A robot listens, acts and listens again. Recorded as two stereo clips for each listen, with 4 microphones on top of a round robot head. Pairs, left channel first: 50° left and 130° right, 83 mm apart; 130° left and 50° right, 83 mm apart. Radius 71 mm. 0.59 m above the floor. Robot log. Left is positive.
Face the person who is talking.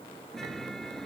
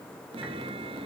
cmd idle
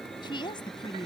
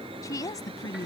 note: The woman speaking: 85° left.
cmd yaw +85
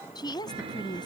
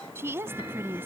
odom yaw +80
note: The woman speaking is now 15° left.
cmd yaw +15
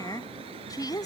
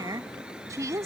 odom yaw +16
end: Facing the woman speaking.